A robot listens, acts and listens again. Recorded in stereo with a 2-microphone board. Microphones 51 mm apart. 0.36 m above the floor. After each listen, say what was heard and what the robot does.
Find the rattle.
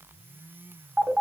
Keep listening.
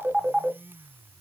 Keep listening.
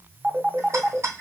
The rattle: about 70° right or 110° right. Turn 70° right.
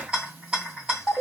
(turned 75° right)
So it is at 20° right. Turn 20° right.
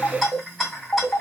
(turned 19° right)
Facing the rattle, 2 to 4 m away.